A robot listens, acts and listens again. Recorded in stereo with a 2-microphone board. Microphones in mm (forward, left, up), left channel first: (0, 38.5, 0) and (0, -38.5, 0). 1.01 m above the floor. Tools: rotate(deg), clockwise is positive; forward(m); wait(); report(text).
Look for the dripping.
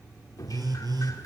rotate(-55)
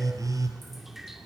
report("Found it: dripping, straight ahead, 1 to 2 m away.")